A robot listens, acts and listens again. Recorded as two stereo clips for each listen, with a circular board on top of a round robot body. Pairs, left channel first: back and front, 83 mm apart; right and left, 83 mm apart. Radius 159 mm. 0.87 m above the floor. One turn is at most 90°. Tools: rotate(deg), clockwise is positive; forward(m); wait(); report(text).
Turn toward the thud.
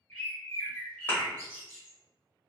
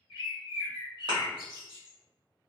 rotate(-90)
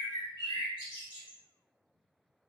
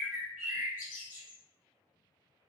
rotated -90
rotate(-25)
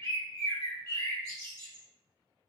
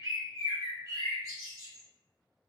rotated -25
report("Facing where the thud came from. I can't hear it now.")